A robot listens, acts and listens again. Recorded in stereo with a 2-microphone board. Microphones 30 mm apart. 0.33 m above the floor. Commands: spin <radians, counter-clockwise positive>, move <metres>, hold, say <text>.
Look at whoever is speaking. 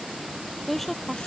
spin 0.52
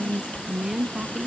spin -0.35
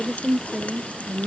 say Facing the woman speaking.